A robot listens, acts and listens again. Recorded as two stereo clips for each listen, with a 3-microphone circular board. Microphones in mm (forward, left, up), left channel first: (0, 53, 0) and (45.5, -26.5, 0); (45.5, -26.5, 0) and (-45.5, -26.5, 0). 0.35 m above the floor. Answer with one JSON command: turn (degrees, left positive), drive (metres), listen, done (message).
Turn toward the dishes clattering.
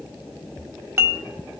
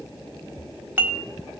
{"turn": -120}
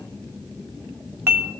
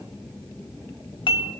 {"done": "Found it: dishes clattering, straight ahead, 1 to 2 m away."}